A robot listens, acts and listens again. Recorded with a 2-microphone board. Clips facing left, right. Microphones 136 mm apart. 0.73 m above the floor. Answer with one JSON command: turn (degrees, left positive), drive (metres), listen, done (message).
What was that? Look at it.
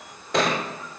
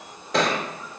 {"turn": 30}
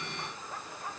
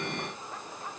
{"listen": true}
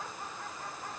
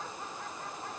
{"done": "I heard a thud, but can't make it out now. It was about 30° right or 150° left."}